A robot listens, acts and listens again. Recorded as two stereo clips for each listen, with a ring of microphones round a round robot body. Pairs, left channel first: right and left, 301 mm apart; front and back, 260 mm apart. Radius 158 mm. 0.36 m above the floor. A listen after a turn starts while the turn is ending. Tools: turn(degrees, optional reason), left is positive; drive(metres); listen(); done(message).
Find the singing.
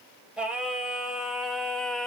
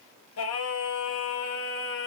done("Found it: singing, straight ahead, 1 to 2 m away.")